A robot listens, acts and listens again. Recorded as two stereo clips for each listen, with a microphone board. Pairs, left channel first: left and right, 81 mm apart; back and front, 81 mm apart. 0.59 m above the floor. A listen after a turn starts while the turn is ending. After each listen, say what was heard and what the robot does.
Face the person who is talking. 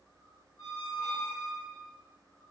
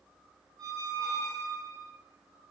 Keep listening.
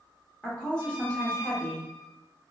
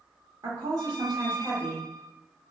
The woman speaking: 15° left. Turn 15° left.
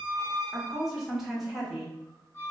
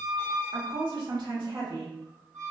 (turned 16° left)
Facing the woman speaking, 1 to 2 m away.